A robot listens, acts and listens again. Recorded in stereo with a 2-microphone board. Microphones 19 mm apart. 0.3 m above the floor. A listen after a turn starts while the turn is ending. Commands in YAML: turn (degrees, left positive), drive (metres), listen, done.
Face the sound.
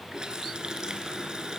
turn: -45
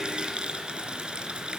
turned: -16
turn: -120
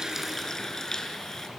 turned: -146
turn: 30
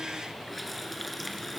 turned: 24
done: "Facing the running tap."